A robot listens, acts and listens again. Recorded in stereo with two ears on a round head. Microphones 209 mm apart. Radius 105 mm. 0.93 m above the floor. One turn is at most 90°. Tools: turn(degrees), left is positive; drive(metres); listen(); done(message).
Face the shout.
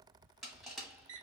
listen()
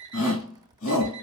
turn(degrees=60)
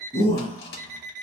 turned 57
turn(degrees=25)
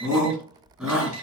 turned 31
done("Found it: a shout, straight ahead.")